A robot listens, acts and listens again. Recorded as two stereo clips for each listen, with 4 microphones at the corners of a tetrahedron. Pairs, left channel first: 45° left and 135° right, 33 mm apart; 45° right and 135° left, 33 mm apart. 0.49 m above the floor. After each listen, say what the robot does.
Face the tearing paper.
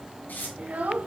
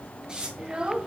Turn 70° left.
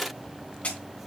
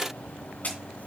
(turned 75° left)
Facing the tearing paper, 2 to 4 m away.